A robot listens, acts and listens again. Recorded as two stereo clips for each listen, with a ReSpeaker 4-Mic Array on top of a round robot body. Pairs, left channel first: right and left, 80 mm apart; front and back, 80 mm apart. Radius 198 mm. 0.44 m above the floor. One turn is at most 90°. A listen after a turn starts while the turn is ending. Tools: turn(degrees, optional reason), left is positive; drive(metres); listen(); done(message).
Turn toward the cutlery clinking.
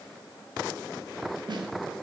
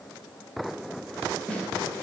listen()
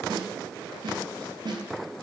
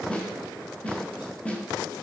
listen()
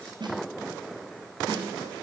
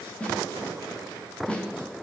done("I can't make out cutlery clinking to turn to.")